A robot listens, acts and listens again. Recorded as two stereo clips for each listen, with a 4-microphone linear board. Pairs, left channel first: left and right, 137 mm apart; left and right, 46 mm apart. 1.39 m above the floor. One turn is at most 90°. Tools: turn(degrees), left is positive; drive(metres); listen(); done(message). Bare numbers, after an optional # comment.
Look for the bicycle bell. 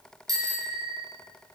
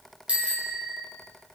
# The bicycle bell: about 25° right or 155° right.
turn(-25)
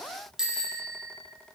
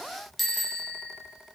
done("Facing the bicycle bell, over 4 m away.")